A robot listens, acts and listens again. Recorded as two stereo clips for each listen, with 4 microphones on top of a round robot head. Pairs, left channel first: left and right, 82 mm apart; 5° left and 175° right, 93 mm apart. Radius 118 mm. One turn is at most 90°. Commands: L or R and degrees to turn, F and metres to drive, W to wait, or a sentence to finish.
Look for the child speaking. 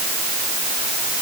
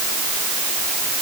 W
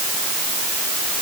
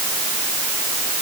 W
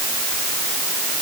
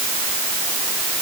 I can't make out a child speaking to turn to.